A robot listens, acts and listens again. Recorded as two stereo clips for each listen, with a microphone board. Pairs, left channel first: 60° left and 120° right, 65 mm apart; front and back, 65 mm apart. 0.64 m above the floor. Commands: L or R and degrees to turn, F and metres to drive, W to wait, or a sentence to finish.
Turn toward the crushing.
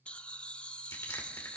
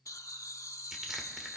L95
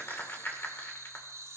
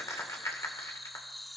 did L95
L10
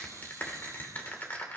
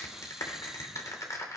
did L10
Facing the crushing, 2 to 4 m away.